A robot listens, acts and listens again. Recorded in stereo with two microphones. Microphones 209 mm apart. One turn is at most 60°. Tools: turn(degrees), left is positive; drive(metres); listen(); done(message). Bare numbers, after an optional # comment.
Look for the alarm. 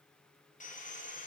listen()
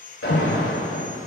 turn(60)
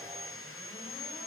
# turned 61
# Nothing new. It was at 30° left.
turn(30)
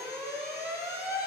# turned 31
# The alarm is now 10° right.
turn(-10)
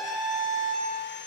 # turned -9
done("Found it: an alarm, straight ahead.")